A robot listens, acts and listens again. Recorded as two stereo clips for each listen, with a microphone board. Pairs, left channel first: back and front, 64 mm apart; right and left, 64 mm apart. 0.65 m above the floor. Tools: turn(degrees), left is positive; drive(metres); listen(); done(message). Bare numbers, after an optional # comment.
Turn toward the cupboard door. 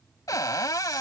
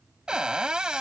# The cupboard door: 165° left.
turn(165)
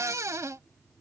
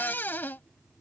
# The cupboard door is now 30° right.
turn(-30)
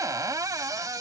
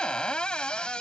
# The cupboard door is now 15° right.
turn(-15)
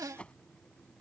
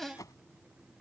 done("Found it: a cupboard door, straight ahead.")